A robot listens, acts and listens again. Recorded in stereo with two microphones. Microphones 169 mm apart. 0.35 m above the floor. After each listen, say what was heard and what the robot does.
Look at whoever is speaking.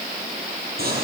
Keep listening.
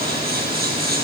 Keep listening.
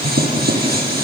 I can't make out anyone speaking to turn to.